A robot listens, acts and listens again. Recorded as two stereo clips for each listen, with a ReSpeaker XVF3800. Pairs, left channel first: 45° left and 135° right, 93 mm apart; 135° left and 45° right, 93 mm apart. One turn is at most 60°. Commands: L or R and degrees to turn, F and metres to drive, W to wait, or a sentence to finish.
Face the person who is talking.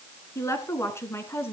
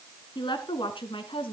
L60
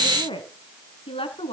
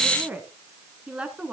L35
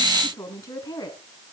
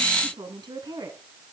Found it: a woman speaking, straight ahead.